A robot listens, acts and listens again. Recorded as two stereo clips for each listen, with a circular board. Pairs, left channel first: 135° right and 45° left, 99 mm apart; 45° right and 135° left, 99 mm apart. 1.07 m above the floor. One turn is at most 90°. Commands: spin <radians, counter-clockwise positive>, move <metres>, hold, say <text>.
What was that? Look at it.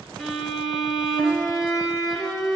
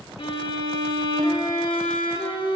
spin -0.79
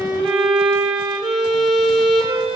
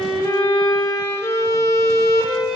say Found it: a violin, straight ahead.